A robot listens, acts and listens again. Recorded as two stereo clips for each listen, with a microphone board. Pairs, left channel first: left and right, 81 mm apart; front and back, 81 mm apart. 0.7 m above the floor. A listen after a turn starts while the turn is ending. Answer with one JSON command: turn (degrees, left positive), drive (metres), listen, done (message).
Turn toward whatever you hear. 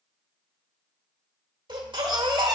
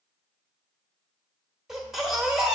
{"turn": -95}
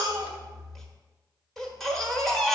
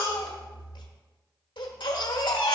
{"done": "Facing the baby crying, 1 to 2 m away."}